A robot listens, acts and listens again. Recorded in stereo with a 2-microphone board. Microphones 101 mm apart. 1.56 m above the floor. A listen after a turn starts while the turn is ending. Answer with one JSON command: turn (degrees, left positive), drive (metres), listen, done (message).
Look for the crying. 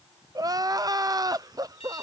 {"turn": -40}
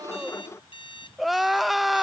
{"done": "Facing the crying."}